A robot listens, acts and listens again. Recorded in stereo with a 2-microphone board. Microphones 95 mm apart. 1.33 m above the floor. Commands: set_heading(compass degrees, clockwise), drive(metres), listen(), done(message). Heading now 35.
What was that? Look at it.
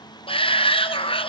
set_heading(325)
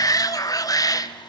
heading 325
set_heading(285)
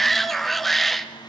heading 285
done("Found it: a shout, straight ahead.")